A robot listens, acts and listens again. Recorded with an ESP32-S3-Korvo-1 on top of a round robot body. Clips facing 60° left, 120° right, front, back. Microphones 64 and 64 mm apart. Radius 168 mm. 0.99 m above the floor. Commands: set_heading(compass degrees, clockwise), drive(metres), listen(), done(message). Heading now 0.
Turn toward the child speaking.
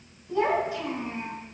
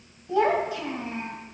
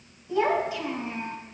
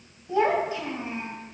set_heading(120)
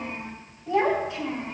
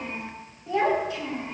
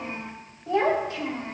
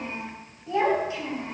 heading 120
set_heading(150)
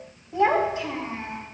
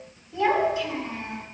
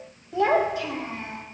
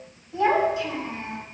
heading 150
set_heading(140)
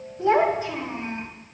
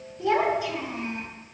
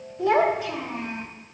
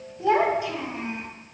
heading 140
set_heading(130)
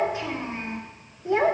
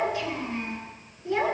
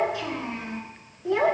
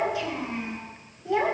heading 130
done("Found it: a child speaking, straight ahead.")